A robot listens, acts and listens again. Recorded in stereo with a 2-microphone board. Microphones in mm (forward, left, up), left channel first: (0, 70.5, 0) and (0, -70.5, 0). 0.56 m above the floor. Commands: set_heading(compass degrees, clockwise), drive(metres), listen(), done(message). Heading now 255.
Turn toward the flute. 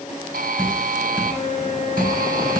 set_heading(200)
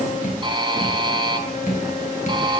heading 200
listen()
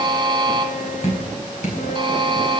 listen()
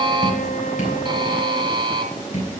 done("I heard a flute, but can't make it out now. It was about straight ahead or 70° left.")